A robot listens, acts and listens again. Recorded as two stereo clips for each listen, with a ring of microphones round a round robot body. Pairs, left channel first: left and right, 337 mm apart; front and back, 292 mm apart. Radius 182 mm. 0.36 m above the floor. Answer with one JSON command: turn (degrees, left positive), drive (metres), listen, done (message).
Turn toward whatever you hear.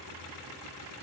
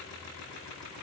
{"listen": true}
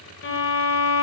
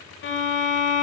{"turn": 45}
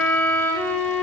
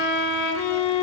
{"done": "Found it: a violin, straight ahead, 1 to 2 m away."}